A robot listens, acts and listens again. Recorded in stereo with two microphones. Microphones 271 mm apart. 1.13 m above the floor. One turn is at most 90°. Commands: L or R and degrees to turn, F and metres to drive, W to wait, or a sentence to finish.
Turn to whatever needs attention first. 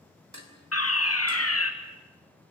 L60
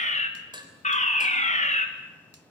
L30
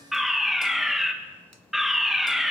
Facing the fire alarm, 1 to 2 m away.